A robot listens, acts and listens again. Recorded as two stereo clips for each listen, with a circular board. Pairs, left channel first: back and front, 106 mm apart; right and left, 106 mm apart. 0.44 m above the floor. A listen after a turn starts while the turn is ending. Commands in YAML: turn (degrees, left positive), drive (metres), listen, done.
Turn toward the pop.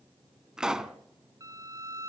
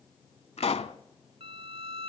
turn: -85
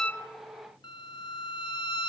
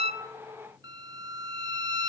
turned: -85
done: "I heard a pop from this way, but can't make it out now."